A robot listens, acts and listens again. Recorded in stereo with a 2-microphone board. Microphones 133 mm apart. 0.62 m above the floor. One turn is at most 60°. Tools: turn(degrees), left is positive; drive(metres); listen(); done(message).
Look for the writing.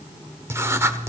turn(degrees=-20)
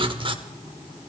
turn(degrees=-60)
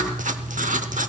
turn(degrees=-60)
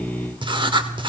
turn(degrees=-40)
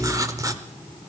turn(degrees=-25)
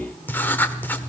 turn(degrees=15)
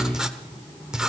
done("Found it: writing, straight ahead.")